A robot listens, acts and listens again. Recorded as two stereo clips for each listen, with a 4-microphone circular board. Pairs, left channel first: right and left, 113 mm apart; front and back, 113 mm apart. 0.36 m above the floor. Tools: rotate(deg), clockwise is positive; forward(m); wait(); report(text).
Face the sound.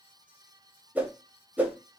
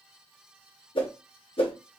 rotate(-15)
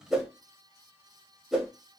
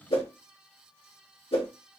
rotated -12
report("Facing the whoosh, under 1 m away.")